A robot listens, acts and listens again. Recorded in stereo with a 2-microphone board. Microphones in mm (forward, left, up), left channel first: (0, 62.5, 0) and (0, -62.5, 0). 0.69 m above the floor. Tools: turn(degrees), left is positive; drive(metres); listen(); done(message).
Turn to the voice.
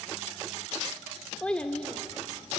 turn(degrees=30)
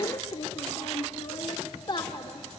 turn(degrees=140)
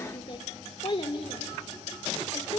turn(degrees=50)
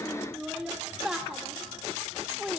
done("Facing the child speaking, 1 to 2 m away.")